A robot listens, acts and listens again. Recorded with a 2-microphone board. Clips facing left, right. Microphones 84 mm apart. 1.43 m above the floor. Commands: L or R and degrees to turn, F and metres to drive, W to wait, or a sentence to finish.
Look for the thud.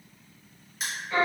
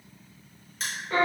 W
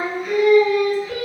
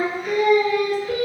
W
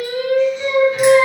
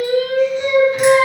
I can't make out a thud to turn to.